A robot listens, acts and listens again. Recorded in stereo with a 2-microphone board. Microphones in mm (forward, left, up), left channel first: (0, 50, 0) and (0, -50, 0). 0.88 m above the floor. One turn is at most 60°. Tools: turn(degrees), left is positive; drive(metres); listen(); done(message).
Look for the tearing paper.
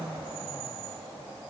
listen()
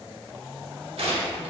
turn(degrees=-60)
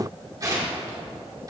turn(degrees=-35)
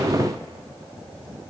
listen()
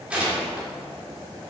turn(degrees=-10)
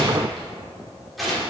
done("Found it: tearing paper, straight ahead.")